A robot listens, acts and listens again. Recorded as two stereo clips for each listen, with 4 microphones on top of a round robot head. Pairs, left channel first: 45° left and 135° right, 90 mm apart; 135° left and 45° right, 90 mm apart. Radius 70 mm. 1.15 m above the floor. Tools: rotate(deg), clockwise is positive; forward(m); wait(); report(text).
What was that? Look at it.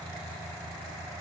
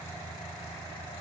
wait()
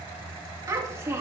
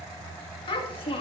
rotate(-160)
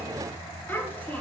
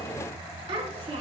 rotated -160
rotate(25)
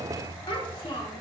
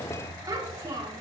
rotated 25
report("Facing the child speaking.")